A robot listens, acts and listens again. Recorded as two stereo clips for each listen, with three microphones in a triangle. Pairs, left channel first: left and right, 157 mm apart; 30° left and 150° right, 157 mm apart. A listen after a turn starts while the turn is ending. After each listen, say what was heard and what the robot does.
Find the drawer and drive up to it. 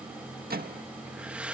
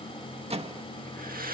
Keep listening.
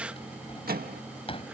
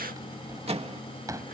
The drawer: 140° left. Turn 140° left.
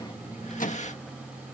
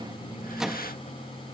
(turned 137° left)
Keep listening.
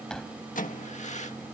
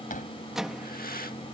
Drive 1.0 m forward.
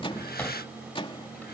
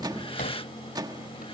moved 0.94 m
The drawer is now 10° left. Turn 10° left.
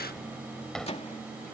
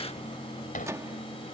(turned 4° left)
Drive 1.0 m forward.
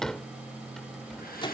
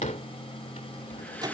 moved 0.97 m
Drive 1.0 m forward.
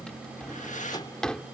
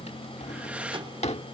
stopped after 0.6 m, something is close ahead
I am next to the drawer.